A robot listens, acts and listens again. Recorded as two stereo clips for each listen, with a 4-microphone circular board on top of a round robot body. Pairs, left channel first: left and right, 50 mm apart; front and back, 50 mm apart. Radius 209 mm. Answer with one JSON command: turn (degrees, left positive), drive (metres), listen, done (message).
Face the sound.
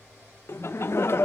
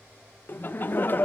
{"turn": 55}
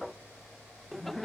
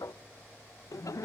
{"done": "Facing the laughter."}